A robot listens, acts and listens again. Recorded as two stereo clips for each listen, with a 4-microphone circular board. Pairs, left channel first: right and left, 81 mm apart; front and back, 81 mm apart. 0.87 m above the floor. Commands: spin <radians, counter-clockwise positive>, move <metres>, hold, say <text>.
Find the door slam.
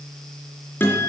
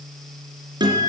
hold
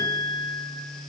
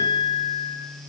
hold
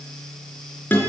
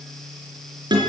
say I can't make out a door slam to turn to.